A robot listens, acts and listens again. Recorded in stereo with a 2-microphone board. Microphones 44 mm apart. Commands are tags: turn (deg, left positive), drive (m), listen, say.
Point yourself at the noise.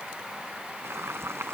<turn deg="-90"/>
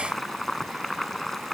<say>Facing the boiling.</say>